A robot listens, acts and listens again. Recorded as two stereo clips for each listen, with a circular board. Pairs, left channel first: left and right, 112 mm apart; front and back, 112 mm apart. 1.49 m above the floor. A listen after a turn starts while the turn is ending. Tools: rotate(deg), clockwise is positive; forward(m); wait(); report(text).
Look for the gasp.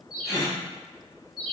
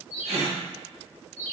rotate(-150)
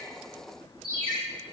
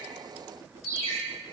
report("I heard a gasp from this way, but can't make it out now.")